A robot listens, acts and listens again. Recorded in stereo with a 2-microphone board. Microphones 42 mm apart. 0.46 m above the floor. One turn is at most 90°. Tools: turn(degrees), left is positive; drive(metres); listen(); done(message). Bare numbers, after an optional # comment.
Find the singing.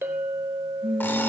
# The singing: about 55° right or 125° right.
turn(-55)
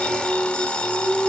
# So it is at 60° right.
turn(-60)
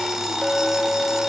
listen()
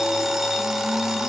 listen()
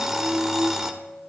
# The singing is now 15° right.
turn(-15)
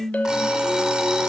done("Found it: singing, straight ahead, over 4 m away.")